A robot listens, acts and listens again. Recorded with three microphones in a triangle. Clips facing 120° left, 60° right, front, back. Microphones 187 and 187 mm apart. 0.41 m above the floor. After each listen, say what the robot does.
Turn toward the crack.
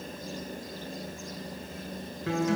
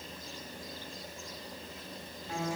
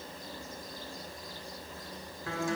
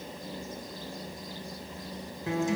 Keep listening.
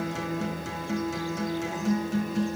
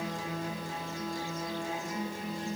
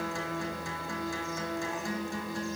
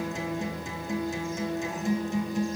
Keep listening.
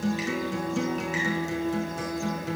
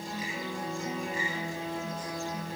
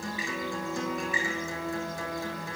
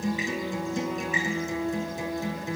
I can't make out a crack, only a guitar.